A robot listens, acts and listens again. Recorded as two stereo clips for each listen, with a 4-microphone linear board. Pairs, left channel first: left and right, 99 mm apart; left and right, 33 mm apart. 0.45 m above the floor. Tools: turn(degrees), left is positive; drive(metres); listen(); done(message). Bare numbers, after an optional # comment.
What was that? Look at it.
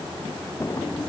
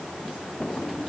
# The drawer: about 35° left or 145° left.
turn(35)
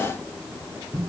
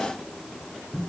listen()
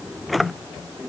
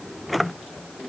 done("Found it: a drawer, straight ahead.")